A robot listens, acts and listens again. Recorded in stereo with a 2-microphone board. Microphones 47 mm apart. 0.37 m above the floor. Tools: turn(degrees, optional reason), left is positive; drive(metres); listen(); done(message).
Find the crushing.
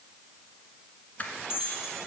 turn(degrees=35, reason="The crushing: about 35° left or 145° left.")
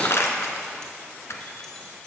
turn(degrees=110, reason="So it is at 110° left.")
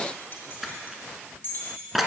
done("Found it: crushing, straight ahead.")